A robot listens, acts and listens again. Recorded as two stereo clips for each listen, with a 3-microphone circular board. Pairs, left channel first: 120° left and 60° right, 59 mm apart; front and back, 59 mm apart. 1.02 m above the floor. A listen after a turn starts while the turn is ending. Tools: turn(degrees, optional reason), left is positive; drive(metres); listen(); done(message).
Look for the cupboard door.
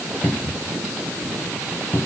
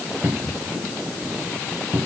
turn(degrees=135, reason="The cupboard door: 135° left.")
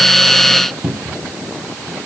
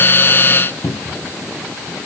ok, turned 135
turn(degrees=15, reason="The cupboard door is now 15° left.")
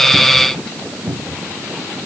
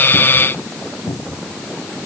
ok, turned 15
done("Facing the cupboard door.")